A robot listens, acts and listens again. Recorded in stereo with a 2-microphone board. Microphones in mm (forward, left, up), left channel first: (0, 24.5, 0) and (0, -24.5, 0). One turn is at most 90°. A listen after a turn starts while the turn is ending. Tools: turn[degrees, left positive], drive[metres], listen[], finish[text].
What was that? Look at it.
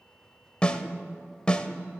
Thought: The snare drum: about 20° left or 160° left.
Action: turn[20]
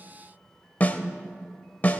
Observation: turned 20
Thought: So it is at 135° left.
Action: turn[90]
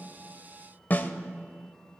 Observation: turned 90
Thought: The snare drum is now 50° left.
Action: turn[50]
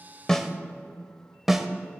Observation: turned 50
Action: finish[Facing the snare drum.]